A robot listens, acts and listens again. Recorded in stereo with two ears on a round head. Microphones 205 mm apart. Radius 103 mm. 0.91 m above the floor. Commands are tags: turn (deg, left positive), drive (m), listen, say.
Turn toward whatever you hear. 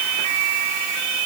<listen/>
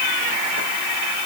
<listen/>
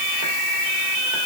<say>I can't make out anything to turn to.</say>